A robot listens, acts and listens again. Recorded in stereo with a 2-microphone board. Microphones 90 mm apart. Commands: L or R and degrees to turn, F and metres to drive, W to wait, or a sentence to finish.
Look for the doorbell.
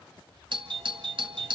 R65
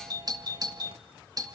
R45
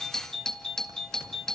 Facing the doorbell, 2 to 4 m away.